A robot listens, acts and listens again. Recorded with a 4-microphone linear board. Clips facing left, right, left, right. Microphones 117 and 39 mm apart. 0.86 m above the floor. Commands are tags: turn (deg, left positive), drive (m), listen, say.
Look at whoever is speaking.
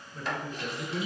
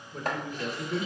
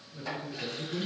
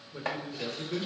<turn deg="-65"/>
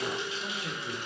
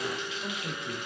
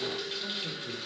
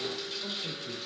<turn deg="-15"/>
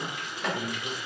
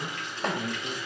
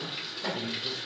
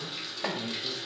<say>Found it: a man speaking, straight ahead, 1 to 2 m away.</say>